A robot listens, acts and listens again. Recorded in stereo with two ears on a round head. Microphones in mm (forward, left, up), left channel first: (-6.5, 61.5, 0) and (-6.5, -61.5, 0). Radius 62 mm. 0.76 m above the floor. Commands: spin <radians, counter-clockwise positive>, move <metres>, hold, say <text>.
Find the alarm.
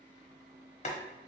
hold
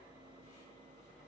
hold
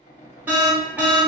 spin -0.52
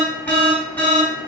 spin 0.26
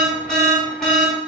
say Facing the alarm.